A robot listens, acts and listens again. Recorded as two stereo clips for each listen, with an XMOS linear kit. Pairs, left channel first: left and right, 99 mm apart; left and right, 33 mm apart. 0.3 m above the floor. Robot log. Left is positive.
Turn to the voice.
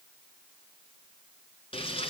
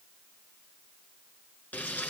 cmd idle
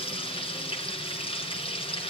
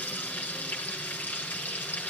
cmd idle
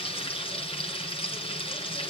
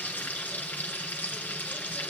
end: I can't make out anyone speaking to turn to.